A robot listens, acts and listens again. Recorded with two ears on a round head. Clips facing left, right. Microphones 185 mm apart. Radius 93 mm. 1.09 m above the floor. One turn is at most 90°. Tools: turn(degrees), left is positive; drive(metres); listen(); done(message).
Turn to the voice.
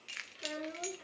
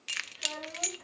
turn(degrees=25)
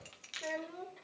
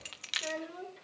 turn(degrees=-10)
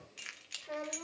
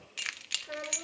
turn(degrees=-10)
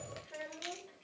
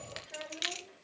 done("Facing the child speaking.")